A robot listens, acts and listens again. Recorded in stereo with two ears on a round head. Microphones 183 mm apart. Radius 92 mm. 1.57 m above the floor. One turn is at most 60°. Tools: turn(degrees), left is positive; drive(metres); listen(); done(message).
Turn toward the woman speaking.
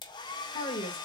turn(degrees=30)
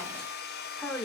turn(degrees=10)
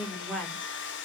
done("Found it: a woman speaking, straight ahead.")